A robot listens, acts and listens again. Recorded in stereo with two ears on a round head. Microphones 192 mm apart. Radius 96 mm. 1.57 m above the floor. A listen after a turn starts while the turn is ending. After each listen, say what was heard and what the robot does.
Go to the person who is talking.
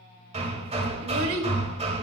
The child speaking: about 70° right or 110° right. Turn 70° right.
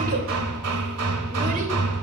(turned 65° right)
Keep listening.
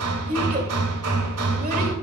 So it is at 40° right. Turn 40° right.
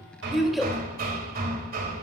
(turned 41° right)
Drive 1.0 m forward.
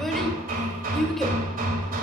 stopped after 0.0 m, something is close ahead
Something is in my way. I am facing the child speaking but have not reached it.